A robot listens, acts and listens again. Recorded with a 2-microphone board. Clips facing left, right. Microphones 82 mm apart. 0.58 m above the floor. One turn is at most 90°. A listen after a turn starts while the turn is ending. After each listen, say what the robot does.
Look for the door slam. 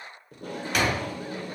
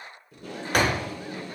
Turn 45° right.
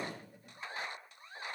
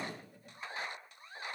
Keep listening.
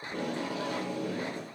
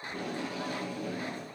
I heard a door slam, but can't make it out now. It was about straight ahead or 90° right.